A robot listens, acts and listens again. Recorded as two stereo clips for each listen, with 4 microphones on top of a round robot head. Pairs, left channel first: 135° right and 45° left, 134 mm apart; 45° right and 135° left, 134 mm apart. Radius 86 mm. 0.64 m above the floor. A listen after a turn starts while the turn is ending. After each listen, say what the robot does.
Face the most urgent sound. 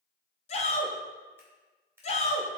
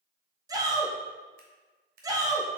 Turn 165° right.
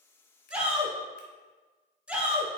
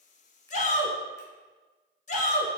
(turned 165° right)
Turn 35° right.
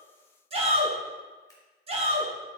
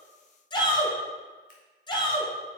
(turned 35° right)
Turn 10° left.
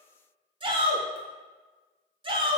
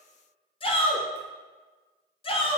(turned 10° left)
Facing the shout, 1 to 2 m away.